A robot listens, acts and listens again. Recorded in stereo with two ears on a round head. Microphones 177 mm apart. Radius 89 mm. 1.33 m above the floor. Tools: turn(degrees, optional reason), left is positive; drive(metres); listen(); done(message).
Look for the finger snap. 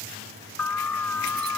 listen()
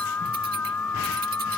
listen()
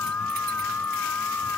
done("I can't make out a finger snap, only an alarm.")